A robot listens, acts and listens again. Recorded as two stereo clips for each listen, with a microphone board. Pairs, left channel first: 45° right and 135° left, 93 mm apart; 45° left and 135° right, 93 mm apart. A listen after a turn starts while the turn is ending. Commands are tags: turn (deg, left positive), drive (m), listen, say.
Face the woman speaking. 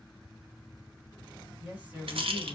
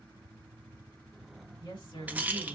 <turn deg="60"/>
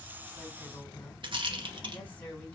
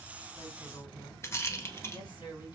<turn deg="25"/>
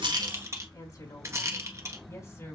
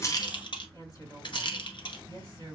<turn deg="10"/>
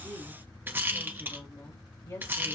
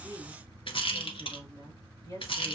<say>Found it: a woman speaking, straight ahead, 2 to 4 m away.</say>